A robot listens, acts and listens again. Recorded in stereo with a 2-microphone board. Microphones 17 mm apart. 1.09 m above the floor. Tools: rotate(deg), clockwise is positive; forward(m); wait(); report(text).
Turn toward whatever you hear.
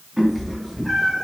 rotate(30)
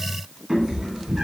rotate(130)
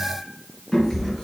rotate(-15)
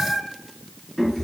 rotate(-15)
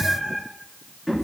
report("Facing the cat meowing, 2 to 4 m away.")